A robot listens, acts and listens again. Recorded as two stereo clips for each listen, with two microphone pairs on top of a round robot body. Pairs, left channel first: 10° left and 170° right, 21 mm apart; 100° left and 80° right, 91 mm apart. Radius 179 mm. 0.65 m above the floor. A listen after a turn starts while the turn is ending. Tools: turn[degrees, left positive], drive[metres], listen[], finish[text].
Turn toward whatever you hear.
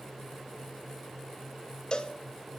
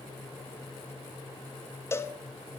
Thought: The cowbell: 45° left.
Action: turn[45]
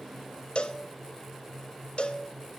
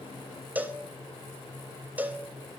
Action: finish[Found it: a cowbell, straight ahead.]